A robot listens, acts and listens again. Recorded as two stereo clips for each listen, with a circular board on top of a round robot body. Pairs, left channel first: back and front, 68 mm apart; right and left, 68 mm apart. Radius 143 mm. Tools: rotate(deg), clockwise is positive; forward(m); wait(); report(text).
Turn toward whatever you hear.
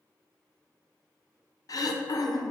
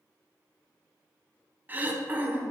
rotate(-155)
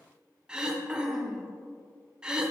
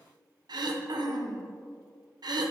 rotate(-80)
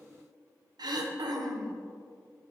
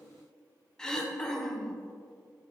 rotate(10)
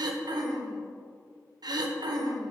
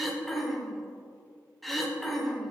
report("Facing the throat clearing, under 1 m away.")